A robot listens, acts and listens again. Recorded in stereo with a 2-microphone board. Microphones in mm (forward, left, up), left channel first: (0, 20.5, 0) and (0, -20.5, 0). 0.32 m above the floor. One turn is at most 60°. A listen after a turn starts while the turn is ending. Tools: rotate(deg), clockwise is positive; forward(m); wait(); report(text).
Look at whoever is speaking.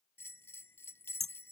wait()
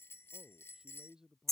rotate(30)
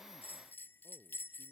wait()
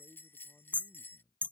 rotate(60)
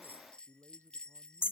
rotate(60)
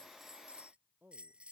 rotate(50)
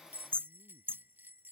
wait()
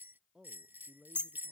rotate(25)
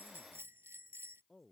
report("Facing the man speaking.")